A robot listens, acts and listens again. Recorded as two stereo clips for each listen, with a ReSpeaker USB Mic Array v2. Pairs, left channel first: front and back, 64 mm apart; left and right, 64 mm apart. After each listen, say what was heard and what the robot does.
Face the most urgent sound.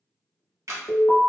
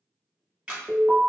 The alarm: 25° right. Turn 25° right.
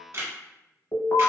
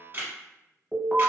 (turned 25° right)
Facing the alarm, under 1 m away.